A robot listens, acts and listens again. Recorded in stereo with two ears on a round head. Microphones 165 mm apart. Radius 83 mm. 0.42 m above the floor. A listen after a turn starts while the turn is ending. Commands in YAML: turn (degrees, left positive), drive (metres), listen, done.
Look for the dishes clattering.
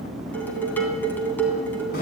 turn: 30
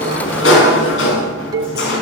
turn: -20
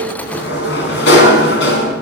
listen: true
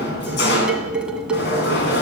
done: "Facing the dishes clattering, 2 to 4 m away."